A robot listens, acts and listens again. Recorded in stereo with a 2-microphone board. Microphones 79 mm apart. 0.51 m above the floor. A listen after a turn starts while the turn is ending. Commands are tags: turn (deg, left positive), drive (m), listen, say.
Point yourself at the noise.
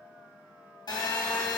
<turn deg="90"/>
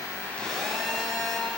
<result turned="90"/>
<say>Facing the phone buzzing, 2 to 4 m away.</say>